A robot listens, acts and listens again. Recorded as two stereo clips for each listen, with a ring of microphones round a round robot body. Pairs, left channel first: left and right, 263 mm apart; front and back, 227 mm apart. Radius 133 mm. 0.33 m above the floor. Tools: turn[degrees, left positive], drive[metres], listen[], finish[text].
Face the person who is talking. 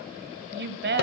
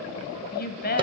Thought: The woman speaking: 45° right.
Action: turn[-45]
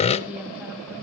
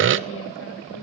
Action: listen[]
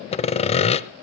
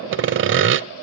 Action: listen[]
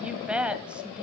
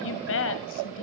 Action: finish[Found it: a woman speaking, straight ahead.]